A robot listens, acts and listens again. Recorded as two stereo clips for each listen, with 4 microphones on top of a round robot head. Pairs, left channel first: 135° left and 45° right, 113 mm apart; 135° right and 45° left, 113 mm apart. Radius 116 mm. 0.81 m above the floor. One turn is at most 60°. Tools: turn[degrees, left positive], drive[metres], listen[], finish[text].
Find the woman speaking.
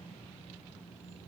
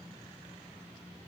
Action: listen[]
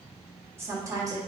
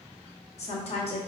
Thought: The woman speaking: 100° right.
Action: turn[-60]
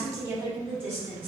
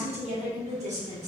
Thought: The woman speaking is now 30° left.
Action: turn[30]
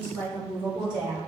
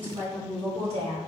Action: finish[Facing the woman speaking.]